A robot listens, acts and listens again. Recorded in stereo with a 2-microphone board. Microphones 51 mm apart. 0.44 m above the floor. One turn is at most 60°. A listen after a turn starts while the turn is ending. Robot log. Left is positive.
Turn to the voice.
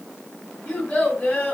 note: The child speaking: about 30° left or 150° left.
cmd yaw +30
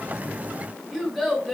end: Facing the child speaking.